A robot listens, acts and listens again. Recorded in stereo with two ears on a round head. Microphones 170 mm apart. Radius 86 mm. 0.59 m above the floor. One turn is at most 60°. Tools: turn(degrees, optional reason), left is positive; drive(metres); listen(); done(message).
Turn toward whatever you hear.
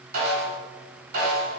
turn(degrees=-50, reason="The snare drum: about 50° right or 130° right.")
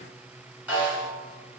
turn(degrees=-10, reason="So it is at 10° right.")
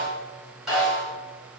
done("Facing the snare drum.")